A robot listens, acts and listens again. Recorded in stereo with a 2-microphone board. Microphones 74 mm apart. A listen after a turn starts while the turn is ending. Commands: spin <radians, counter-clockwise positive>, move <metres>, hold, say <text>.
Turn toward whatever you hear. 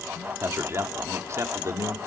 spin -0.79
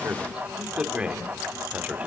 spin -0.35
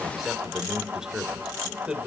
spin -0.17
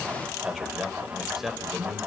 say Found it: a man speaking, straight ahead, 2 to 4 m away.